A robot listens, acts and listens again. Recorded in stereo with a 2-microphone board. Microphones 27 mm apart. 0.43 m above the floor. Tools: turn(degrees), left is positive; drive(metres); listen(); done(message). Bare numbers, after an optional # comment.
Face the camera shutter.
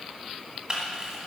# The camera shutter: about 30° right or 150° right.
turn(-30)
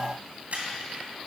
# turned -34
# So it is at 115° right.
turn(-115)
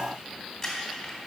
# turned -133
# The camera shutter is now 20° left.
turn(20)
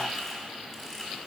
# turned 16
done("Facing the camera shutter, 2 to 4 m away.")